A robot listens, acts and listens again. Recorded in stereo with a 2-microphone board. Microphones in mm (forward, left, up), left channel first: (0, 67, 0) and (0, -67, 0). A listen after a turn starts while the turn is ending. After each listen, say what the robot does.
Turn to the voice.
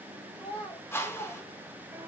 Turn 55° left.
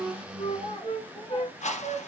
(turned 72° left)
Turn 45° left.
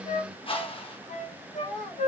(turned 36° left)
Turn 10° left.
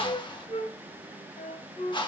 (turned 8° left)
Keep listening.
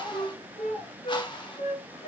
Facing the child speaking.